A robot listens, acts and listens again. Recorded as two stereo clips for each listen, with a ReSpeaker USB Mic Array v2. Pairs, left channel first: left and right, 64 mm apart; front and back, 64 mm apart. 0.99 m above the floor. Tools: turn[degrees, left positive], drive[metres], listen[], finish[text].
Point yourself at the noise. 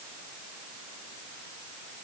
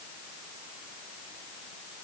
Action: listen[]
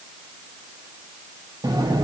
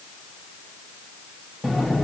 Thought: The sliding door: 90° right.
Action: turn[-90]
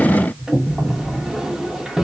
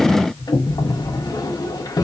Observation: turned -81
Thought: The sliding door is now 10° right.
Action: turn[-10]
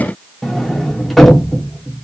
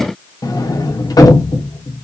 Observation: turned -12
Action: finish[Facing the sliding door.]